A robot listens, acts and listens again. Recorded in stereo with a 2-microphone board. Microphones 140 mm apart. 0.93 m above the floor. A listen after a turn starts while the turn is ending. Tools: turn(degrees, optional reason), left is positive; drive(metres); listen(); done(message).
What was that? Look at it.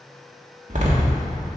turn(degrees=-60, reason="The door slam: about 60° right or 120° right.")
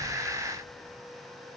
listen()
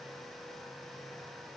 done("I heard a door slam, but can't make it out now. It was about straight ahead or 60° right.")